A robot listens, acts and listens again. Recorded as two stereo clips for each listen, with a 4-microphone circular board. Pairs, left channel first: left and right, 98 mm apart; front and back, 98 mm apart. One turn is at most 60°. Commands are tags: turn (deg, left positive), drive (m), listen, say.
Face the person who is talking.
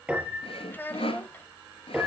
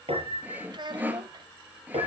<turn deg="60"/>
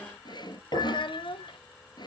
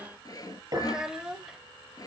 <turn deg="60"/>
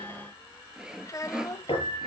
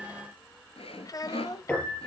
<turn deg="40"/>
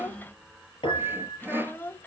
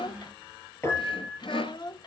<turn deg="25"/>
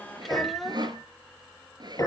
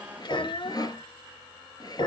<say>Found it: a child speaking, straight ahead.</say>